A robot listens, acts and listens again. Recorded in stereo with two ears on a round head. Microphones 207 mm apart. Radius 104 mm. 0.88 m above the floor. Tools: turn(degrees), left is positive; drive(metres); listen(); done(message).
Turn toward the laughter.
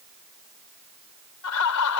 turn(degrees=90)
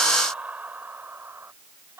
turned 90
turn(degrees=-10)
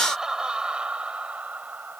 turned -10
done("Facing the laughter.")